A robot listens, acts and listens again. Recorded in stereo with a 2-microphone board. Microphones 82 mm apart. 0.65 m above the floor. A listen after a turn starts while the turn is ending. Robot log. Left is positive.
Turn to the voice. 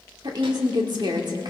note: The woman speaking: about 55° right or 125° right.
cmd yaw -55
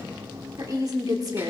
note: So it is at 55° right.
cmd yaw -55
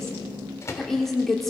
end: Facing the woman speaking.